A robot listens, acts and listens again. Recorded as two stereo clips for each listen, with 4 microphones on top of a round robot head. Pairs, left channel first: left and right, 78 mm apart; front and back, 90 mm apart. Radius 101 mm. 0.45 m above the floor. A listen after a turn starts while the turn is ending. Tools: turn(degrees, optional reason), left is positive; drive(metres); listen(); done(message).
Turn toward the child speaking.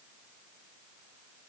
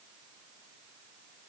listen()
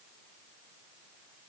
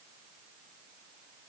listen()
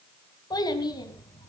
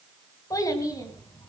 turn(degrees=55, reason="The child speaking: 55° left.")
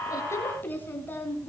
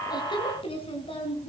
turn(degrees=25, reason="The child speaking is now 25° left.")
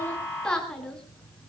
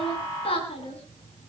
turn(degrees=10, reason="The child speaking is now 10° left.")
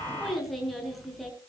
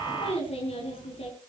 done("Found it: a child speaking, straight ahead.")